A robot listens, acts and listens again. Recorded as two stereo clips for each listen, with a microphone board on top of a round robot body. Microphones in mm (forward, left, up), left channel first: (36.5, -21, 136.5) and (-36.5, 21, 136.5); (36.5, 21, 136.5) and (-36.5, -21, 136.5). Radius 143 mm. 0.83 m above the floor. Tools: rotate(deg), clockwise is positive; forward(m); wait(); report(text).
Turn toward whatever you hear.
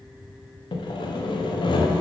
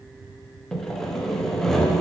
rotate(55)
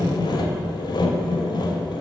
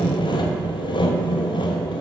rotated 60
report("Facing the sawing.")